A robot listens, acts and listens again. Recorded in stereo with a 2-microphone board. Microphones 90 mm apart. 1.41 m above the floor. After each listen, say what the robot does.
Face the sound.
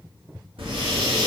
Turn 90° right.
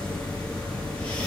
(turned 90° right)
Turn 10° left.
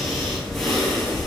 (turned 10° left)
Found it: breathing, straight ahead.